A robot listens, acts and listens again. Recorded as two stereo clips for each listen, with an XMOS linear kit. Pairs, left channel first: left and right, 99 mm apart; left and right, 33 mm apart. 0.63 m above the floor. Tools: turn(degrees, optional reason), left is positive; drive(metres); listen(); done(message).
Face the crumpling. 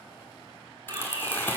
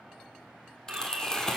turn(degrees=20, reason="The crumpling: about 20° left or 160° left.")
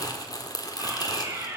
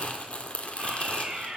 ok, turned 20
turn(degrees=135, reason="So it is at 135° left.")
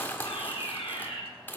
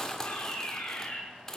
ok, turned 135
turn(degrees=20, reason="The crumpling is now 20° left.")
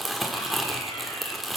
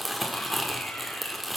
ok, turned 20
done("Found it: crumpling, straight ahead, 1 to 2 m away.")